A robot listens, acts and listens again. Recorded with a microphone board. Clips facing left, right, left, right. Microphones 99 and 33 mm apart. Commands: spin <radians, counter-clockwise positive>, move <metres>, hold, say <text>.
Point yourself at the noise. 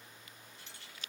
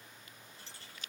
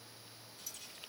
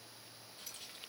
spin -0.61
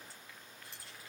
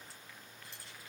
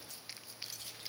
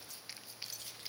say Facing the keys jangling.